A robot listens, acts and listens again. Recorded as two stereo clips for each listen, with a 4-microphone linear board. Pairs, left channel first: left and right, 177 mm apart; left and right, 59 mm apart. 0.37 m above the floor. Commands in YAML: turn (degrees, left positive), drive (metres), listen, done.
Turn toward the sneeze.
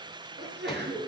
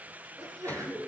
turn: -90
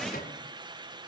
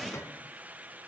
done: "Facing where the sneeze came from. I can't hear it now."